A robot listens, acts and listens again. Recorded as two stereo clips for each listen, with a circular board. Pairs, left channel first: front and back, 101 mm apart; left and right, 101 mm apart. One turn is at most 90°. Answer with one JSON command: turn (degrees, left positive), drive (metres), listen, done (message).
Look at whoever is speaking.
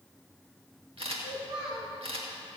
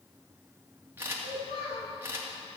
{"turn": 90}
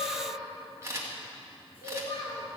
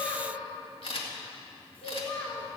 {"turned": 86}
{"turn": 15}
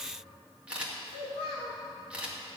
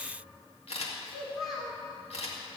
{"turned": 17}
{"done": "Facing the child speaking, 1 to 2 m away."}